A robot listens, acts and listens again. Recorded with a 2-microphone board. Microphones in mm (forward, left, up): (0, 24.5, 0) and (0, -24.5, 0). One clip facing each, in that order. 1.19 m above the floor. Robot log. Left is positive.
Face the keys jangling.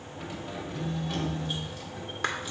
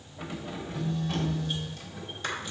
cmd yaw +30
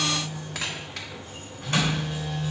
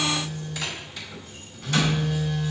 cmd idle
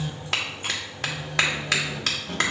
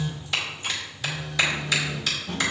note: So it is at 125° left.
cmd yaw +125
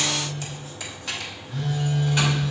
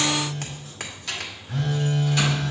note: The keys jangling is now 15° left.
cmd yaw +15
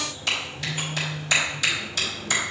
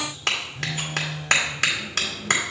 note: The keys jangling is now 10° left.
cmd yaw +10
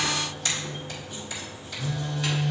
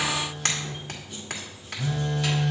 cmd idle
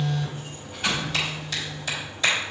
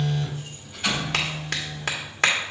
end: Facing the keys jangling, over 4 m away.